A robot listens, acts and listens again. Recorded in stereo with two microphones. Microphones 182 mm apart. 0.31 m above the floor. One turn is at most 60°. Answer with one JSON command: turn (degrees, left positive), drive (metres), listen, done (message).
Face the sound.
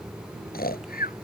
{"turn": 55}
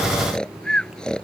{"done": "Found it: snoring, straight ahead."}